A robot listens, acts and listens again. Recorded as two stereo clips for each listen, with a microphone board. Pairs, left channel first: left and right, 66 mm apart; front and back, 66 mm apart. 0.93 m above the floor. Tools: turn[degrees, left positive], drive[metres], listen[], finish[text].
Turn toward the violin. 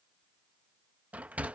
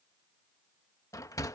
Action: listen[]
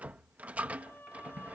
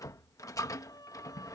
Thought: The violin: 30° left.
Action: turn[30]
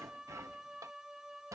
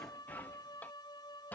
Thought: The violin is now 10° right.
Action: turn[-10]
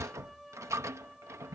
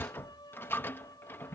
Action: finish[Found it: a violin, straight ahead.]